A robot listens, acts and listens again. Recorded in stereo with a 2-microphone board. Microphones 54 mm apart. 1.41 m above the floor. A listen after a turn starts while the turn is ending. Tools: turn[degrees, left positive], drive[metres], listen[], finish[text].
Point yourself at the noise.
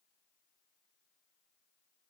Action: listen[]
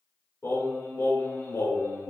Thought: The singing: about 70° left or 110° left.
Action: turn[70]
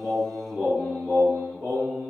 Thought: So it is at 25° left.
Action: turn[25]
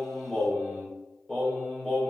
Thought: The singing is now 15° left.
Action: turn[15]
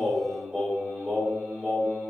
Action: finish[Found it: singing, straight ahead.]